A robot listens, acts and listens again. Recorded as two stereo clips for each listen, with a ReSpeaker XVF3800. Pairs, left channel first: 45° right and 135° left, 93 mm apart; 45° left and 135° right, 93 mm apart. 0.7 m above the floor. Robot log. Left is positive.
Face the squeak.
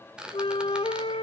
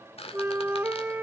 note: The squeak: 55° left.
cmd yaw +55
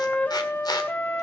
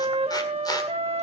cmd idle
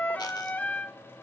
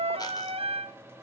cmd idle
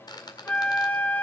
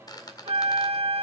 end: Found it: a squeak, straight ahead.